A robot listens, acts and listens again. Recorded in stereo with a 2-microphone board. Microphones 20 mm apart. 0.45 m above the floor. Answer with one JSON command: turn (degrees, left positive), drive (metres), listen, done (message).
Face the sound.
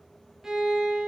{"turn": -25}
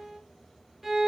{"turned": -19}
{"turn": -10}
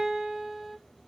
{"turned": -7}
{"done": "Found it: a violin, straight ahead."}